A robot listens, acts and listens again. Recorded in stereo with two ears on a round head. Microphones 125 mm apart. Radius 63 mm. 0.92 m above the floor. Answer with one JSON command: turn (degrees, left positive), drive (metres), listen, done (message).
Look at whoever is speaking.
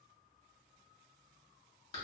{"listen": true}
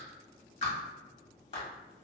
{"listen": true}
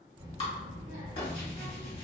{"turn": -30}
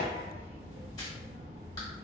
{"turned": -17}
{"turn": -135}
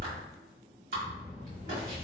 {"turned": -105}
{"turn": -25}
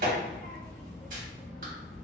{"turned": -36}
{"turn": 10}
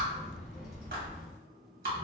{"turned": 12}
{"done": "Found it: a child speaking, straight ahead, 1 to 2 m away."}